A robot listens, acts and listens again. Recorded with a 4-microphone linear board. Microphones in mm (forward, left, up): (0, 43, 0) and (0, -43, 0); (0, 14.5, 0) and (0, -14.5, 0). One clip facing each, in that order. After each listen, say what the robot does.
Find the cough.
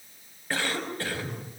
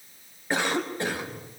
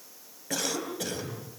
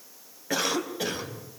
Turn 20° right.
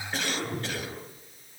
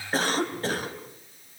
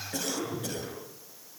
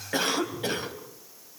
Turn 140° right.
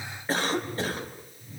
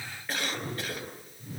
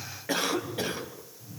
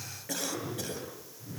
Turn 35° left.
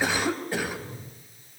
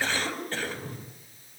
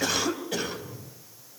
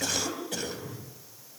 Turn 10° left.
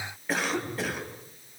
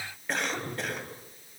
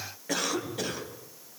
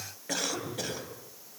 Found it: a cough, straight ahead, over 4 m away.